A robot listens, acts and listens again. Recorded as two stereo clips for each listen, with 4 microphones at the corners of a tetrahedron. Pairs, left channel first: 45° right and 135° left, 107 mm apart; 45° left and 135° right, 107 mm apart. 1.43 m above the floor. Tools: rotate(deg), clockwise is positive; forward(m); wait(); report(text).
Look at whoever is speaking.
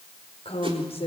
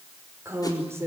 rotate(70)
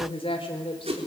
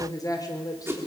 rotate(10)
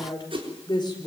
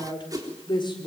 report("Facing the woman speaking, over 4 m away.")